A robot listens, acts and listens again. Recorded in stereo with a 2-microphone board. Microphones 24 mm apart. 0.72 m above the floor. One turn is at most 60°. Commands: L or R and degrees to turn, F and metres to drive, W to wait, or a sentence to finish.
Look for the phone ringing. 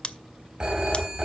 R35
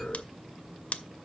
W
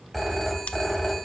Facing the phone ringing.